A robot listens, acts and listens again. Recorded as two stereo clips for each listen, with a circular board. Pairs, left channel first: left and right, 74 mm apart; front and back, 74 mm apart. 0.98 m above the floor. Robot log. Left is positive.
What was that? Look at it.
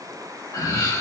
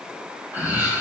note: The laughter: 120° left.
cmd yaw +120
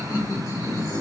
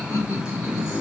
note: The laughter is now 55° left.
cmd yaw +55
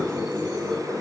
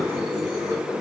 note: The laughter is now 15° left.
cmd yaw +15
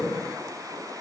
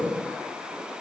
end: Found it: laughter, straight ahead.